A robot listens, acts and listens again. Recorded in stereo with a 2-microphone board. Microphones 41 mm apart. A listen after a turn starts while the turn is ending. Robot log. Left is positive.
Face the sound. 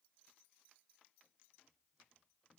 cmd idle
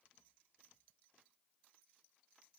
cmd idle
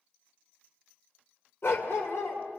note: The dog barking: about 70° left or 110° left.
cmd yaw +70
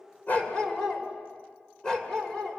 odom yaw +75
note: So it is at 15° left.
cmd yaw +15
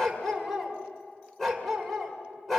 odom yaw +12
end: Found it: a dog barking, straight ahead.